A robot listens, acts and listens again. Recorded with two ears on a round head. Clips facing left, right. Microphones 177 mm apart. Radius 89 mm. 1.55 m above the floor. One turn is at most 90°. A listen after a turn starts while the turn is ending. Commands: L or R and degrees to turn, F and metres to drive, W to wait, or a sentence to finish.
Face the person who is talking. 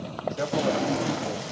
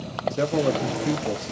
R40
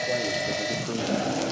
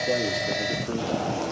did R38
W
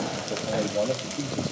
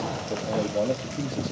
Facing the man speaking.